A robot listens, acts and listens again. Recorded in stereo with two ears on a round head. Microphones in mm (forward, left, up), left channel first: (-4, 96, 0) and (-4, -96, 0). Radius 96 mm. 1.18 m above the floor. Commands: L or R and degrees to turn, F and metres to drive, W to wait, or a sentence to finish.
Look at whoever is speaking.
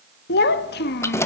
L50
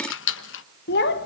L65
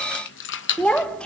Facing the child speaking.